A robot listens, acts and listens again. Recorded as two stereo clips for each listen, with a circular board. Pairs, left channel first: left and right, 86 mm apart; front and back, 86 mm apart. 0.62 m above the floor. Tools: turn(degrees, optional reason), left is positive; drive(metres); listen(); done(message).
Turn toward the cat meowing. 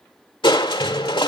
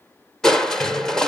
listen()
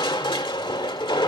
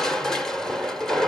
listen()
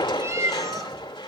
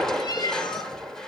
turn(degrees=-35, reason="The cat meowing: 35° right.")
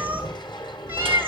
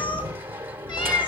listen()
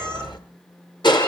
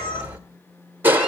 listen()
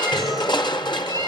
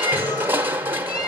turn(degrees=-40, reason="The cat meowing is now 40° right.")
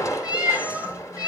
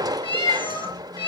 turn(degrees=-15, reason="The cat meowing is now 15° right.")
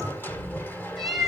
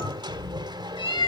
done("Facing the cat meowing, over 4 m away.")